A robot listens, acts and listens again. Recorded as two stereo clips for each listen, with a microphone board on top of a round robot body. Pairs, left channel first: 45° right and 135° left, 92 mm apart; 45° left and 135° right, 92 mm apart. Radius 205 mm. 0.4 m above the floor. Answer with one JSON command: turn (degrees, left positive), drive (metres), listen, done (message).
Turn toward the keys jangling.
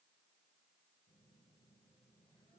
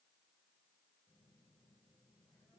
{"listen": true}
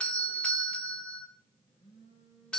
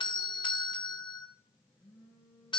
{"listen": true}
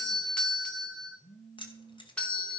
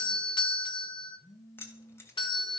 {"turn": -15}
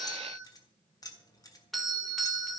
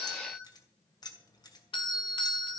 {"done": "Facing the keys jangling."}